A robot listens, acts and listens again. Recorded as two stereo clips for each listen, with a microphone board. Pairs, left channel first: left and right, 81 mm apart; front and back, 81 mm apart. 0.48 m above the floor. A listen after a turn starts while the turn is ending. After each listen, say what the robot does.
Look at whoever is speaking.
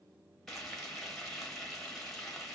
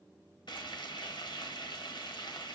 Keep listening.
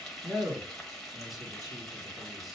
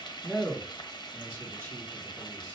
Turn 55° right.
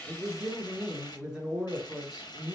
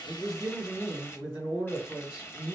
Facing the man speaking.